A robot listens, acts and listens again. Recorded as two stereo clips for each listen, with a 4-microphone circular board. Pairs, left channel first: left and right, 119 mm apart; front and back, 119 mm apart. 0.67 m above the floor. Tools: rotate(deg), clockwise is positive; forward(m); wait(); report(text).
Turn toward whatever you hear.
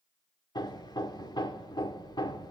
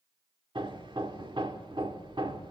rotate(-140)
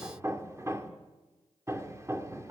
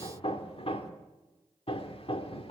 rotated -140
rotate(30)
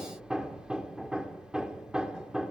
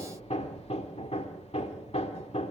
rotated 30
rotate(10)
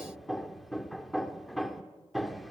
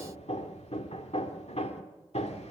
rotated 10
report("Found it: hammering, straight ahead.")